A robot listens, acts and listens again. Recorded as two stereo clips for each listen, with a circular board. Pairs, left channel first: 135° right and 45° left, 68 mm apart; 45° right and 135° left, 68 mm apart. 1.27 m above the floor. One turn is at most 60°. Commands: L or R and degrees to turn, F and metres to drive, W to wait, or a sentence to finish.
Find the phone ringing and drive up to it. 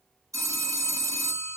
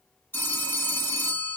L10
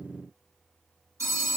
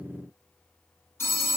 F1.0
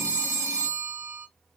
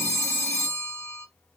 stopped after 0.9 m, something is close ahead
I am next to the phone ringing.